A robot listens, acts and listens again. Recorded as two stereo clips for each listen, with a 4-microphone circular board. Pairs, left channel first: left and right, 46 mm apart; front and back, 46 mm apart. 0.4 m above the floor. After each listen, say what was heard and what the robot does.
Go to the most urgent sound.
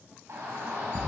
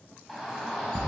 The shout: 95° right. Turn 95° right.
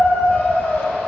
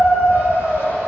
The shout is now 20° left. Turn 20° left.
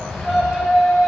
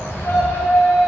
Drive 1.0 m forward.
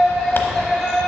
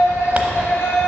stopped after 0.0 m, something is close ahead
Blocked. The shout is further on, straight ahead.